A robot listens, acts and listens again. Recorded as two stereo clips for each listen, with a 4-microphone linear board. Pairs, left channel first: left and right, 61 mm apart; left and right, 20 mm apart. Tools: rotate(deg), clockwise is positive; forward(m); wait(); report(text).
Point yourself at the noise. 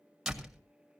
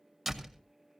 rotate(30)
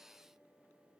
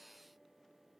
wait()
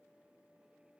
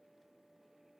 report("I heard a door slam, but can't make it out now. It was about 25° left or 145° right.")